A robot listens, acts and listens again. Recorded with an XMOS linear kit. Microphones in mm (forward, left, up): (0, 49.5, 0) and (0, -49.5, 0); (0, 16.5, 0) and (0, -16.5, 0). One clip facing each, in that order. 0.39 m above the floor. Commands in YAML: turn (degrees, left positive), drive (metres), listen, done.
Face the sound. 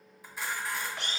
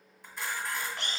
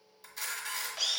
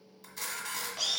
turn: 30
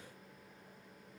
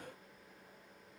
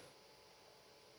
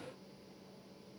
listen: true
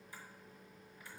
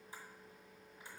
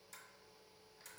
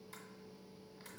turn: -25
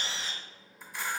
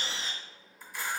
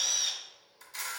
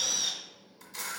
done: "Found it: a camera shutter, straight ahead."